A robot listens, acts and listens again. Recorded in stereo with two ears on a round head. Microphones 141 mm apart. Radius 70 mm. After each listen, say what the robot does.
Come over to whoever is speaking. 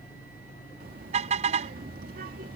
Turn 55° right.
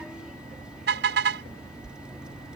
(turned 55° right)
Drive 1.0 m forward.
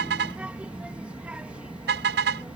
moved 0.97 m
Turn 10° right.
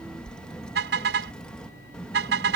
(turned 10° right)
Drive 1.0 m forward.
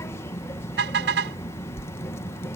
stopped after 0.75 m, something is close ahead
Turn 20° left.
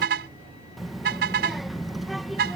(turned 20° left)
Arrived at the child speaking, straight ahead.